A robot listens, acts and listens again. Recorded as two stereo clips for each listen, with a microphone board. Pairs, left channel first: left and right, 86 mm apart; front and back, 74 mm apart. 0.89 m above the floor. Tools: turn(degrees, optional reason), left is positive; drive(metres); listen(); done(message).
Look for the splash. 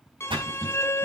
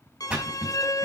turn(degrees=-105, reason="The splash: 105° right.")
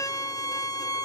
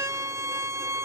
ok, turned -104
done("I heard a splash from this way, but can't make it out now.")